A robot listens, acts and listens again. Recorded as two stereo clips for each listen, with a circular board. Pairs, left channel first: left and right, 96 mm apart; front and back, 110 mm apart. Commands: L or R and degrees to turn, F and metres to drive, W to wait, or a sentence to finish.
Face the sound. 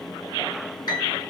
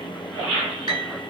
L135
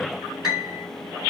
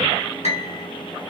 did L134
Facing the piano, 2 to 4 m away.